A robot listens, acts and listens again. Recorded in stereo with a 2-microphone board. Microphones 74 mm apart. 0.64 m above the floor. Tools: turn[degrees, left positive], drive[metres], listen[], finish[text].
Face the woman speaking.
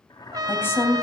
Thought: The woman speaking: about 30° left or 150° left.
Action: turn[30]
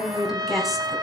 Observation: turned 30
Action: finish[Facing the woman speaking.]